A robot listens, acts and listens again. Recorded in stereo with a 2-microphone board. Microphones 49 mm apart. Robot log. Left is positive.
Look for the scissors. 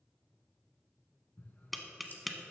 note: The scissors: about 40° left or 140° left.
cmd yaw +40
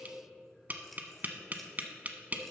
cmd idle
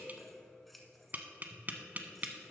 end: Facing the scissors, 1 to 2 m away.